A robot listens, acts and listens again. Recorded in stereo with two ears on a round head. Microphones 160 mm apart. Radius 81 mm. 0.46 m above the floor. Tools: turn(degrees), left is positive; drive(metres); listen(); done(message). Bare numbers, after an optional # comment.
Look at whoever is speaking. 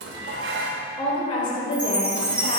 # The woman speaking: about 30° left or 150° left.
turn(30)
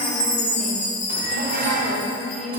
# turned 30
done("Facing the woman speaking.")